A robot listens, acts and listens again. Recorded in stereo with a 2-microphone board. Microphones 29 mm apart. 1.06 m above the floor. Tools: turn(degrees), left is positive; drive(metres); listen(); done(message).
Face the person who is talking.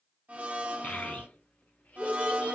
turn(degrees=60)
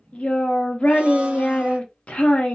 turn(degrees=50)
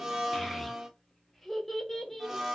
turn(degrees=15)
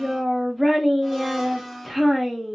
done("Facing the child speaking, under 1 m away.")